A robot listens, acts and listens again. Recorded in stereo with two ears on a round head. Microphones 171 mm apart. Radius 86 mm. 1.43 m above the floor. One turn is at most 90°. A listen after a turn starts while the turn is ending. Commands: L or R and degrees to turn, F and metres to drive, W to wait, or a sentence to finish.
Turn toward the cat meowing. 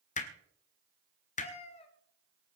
L30
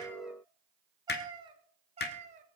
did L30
R35
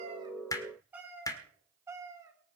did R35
R15
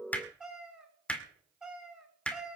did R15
Facing the cat meowing.